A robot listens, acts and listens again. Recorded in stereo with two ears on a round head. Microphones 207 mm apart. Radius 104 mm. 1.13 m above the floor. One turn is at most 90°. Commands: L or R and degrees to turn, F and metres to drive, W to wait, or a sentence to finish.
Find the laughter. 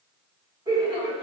R25
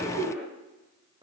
R20
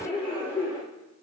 R30
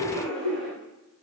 Facing the laughter.